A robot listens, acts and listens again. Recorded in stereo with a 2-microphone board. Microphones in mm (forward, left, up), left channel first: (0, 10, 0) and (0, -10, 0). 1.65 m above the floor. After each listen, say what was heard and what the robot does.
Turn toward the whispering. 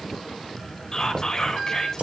The whispering: about 25° left or 155° left. Turn 25° left.
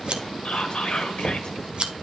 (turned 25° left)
So it is at 130° left. Turn 130° left.
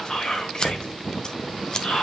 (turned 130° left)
The whispering is now 45° left. Turn 45° left.
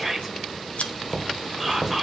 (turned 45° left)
Facing the whispering.